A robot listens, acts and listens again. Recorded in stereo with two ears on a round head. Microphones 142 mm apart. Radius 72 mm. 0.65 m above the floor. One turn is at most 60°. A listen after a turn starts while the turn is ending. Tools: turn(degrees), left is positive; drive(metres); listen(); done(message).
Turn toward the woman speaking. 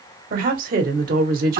turn(degrees=-60)
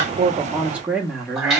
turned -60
done("Found it: a woman speaking, straight ahead.")